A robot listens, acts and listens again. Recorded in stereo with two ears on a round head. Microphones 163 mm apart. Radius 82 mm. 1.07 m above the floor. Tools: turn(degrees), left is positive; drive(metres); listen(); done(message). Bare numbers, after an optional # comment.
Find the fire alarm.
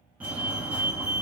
turn(-30)
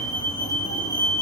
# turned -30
# So it is at 20° left.
turn(20)
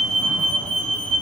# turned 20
done("Facing the fire alarm, 2 to 4 m away.")